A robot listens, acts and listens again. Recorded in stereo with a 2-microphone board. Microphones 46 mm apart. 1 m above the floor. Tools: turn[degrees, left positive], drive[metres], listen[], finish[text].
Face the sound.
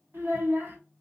Thought: The child speaking: about 60° right or 120° right.
Action: turn[-60]
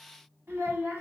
Thought: So it is at 60° right.
Action: turn[-60]
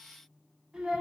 Thought: The child speaking is now 15° right.
Action: turn[-15]
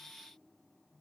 Action: listen[]
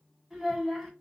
Action: finish[Facing the child speaking, 1 to 2 m away.]